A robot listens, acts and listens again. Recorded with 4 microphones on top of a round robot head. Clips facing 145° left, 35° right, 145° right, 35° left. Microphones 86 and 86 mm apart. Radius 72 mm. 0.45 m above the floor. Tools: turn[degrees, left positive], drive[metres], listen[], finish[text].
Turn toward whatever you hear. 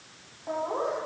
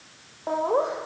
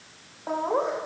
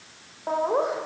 Thought: The laughter: 45° right.
Action: turn[-45]
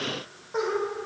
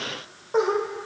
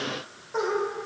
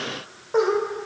Action: finish[Found it: laughter, straight ahead.]